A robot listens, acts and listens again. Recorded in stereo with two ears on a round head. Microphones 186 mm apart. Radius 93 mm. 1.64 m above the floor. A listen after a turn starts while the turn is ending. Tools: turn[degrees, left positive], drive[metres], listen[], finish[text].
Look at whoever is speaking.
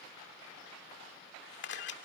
Action: listen[]
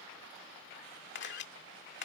Action: listen[]
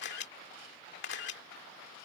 Action: finish[I can't make out anyone speaking, only a camera shutter.]